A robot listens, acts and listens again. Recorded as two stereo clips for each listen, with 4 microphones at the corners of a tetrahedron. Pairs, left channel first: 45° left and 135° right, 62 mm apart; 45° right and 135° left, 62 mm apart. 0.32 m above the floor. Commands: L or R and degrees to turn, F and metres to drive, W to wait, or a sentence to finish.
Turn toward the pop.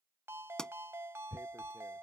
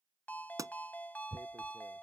L120
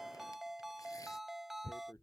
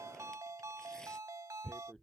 I heard a pop from this way, but can't make it out now.